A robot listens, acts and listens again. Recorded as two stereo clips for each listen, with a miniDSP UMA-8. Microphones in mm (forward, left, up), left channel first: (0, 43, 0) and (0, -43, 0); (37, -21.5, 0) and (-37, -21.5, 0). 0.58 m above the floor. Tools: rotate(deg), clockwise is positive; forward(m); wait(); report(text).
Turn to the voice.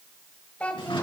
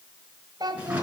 rotate(-165)
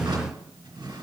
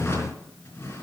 wait()
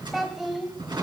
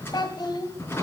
report("Facing the child speaking.")